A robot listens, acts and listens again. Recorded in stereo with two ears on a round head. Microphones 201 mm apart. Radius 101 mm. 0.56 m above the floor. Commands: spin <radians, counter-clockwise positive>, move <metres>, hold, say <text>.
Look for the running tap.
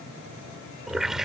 spin 0.52
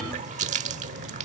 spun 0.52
spin -0.61
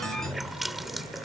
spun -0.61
say Found it: a running tap, straight ahead.